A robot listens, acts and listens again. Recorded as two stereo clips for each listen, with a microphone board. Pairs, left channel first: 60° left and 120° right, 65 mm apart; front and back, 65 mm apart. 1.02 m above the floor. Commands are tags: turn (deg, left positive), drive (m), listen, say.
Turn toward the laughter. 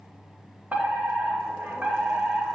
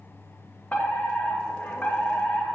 <listen/>
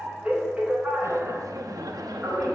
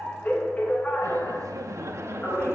<turn deg="-135"/>
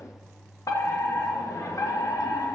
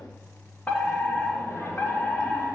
<listen/>
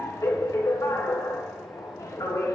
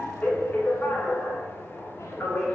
<listen/>
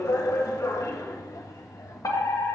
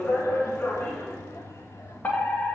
<turn deg="35"/>
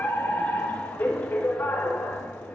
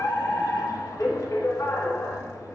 <listen/>
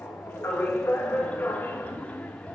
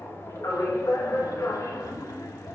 <turn deg="-10"/>
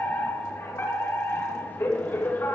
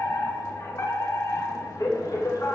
<listen/>
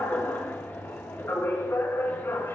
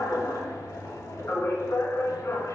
<listen/>
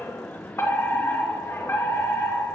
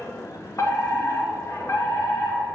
<say>Facing the laughter.</say>